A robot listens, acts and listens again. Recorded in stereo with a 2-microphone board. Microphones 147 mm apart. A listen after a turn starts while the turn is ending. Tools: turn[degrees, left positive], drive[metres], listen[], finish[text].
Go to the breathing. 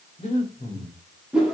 Thought: The breathing: about 55° left or 125° left.
Action: turn[55]
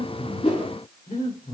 Thought: So it is at 65° left.
Action: turn[65]
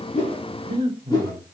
Thought: The breathing is now 35° right.
Action: turn[-35]
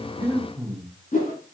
Action: drive[1.0]
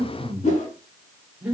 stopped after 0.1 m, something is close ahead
Thought: The breathing is now 10° right.
Action: turn[-10]
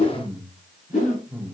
Action: finish[Blocked. The breathing is further on, straight ahead.]